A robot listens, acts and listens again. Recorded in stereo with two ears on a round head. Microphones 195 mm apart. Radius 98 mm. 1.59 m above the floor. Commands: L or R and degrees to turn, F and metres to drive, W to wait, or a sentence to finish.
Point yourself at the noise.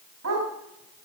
R75
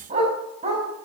R30
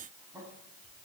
W
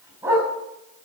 R10
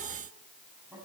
W
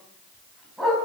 Facing the dog barking.